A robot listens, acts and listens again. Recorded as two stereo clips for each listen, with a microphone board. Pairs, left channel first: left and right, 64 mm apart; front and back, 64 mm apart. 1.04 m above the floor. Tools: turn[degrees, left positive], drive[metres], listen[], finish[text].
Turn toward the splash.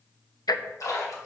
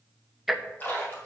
Thought: The splash: 60° left.
Action: turn[60]
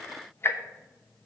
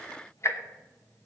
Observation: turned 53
Action: finish[I heard a splash from this way, but can't make it out now.]